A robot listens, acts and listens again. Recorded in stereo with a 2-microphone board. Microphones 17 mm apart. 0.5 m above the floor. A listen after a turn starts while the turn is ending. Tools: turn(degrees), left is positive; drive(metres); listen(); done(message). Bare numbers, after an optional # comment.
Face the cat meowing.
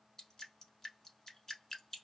listen()
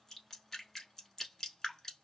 listen()
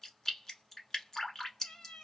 turn(90)
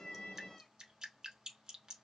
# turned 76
# Nothing new. It was at 15° left.
turn(15)
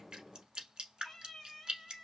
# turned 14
# The cat meowing is now 15° left.
turn(15)
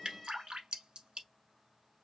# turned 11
done("Facing the cat meowing.")